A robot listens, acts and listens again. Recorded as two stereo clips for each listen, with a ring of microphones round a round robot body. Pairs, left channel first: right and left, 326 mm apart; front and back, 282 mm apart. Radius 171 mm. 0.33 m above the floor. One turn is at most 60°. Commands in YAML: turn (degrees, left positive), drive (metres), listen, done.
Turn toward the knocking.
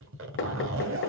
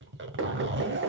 turn: -60
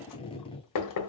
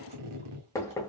turn: -60
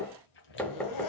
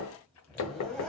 done: "Facing the knocking."